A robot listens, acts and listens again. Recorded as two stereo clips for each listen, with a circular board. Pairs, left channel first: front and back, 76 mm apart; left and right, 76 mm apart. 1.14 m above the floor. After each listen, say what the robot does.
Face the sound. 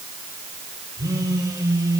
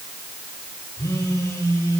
Turn 140° left.
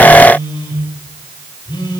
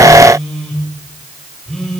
Facing the phone buzzing.